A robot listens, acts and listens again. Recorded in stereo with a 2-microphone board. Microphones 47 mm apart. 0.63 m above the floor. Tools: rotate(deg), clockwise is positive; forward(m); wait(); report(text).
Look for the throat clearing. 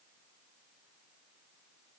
wait()
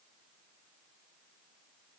wait()
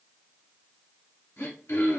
rotate(-90)
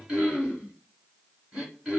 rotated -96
rotate(15)
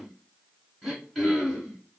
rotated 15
report("Found it: throat clearing, straight ahead, 1 to 2 m away.")